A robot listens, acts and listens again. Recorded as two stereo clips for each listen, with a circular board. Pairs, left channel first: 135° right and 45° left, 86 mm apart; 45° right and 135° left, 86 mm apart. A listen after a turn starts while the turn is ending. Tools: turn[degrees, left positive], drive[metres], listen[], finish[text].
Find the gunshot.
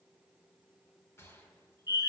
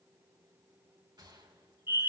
Thought: The gunshot: 165° left.
Action: turn[165]
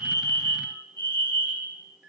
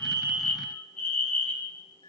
Action: finish[I heard a gunshot from this way, but can't make it out now.]